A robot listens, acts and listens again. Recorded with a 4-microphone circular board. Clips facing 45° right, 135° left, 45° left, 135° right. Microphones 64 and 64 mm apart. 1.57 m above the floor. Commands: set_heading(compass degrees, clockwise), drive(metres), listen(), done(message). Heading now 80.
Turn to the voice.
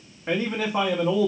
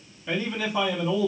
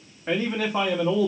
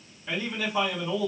done("Facing the man speaking.")